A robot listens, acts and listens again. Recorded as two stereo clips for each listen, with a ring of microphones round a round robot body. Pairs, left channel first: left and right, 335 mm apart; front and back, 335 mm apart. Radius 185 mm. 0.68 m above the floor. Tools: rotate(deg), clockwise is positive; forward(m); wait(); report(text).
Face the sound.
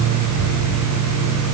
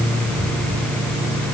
wait()
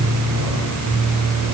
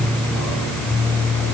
wait()
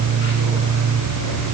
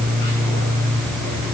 report("I can't make out anything to turn to.")